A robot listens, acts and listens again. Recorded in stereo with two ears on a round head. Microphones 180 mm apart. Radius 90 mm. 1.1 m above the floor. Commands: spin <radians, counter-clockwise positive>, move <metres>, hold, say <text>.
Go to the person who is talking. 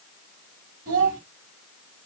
spin -0.79
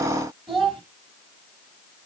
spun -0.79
move 1.0
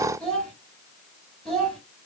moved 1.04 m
move 1.0
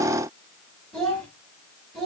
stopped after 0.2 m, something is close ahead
say Blocked. The child speaking is further on, straight ahead.